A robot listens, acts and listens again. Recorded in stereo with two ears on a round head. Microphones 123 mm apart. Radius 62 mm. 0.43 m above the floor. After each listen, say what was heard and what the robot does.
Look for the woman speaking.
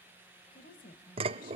The woman speaking: about 65° left or 115° left. Turn 65° left.
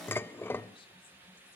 Keep listening.
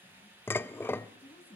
So it is at 45° left. Turn 45° left.
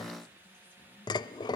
Keep listening.
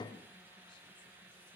Keep listening.
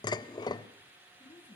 The woman speaking is now 35° left. Turn 35° left.
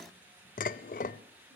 Keep listening.
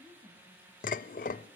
The woman speaking is now 10° right. Turn 10° right.
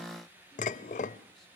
Keep listening.
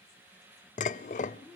Facing the woman speaking, over 4 m away.